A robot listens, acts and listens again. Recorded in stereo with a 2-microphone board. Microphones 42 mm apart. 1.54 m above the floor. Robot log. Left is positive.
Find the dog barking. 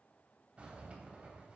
cmd idle
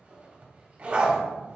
note: The dog barking: about 30° right or 150° right.
cmd yaw -30
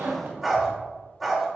end: Found it: a dog barking, straight ahead.